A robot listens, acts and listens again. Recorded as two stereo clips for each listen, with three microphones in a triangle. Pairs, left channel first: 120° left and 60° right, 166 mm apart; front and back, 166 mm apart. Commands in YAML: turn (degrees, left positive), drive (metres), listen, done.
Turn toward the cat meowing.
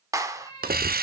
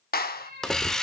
turn: -175
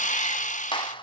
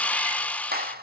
listen: true
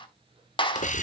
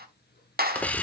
listen: true
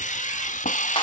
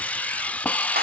done: "Facing where the cat meowing came from. I can't hear it now."